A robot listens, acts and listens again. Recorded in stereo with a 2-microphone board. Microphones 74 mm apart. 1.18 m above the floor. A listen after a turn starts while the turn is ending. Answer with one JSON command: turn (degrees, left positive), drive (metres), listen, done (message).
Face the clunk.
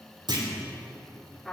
{"turn": -70}
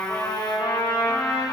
{"listen": true}
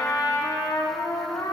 {"done": "I heard a clunk, but can't make it out now. It was about straight ahead or 40° right."}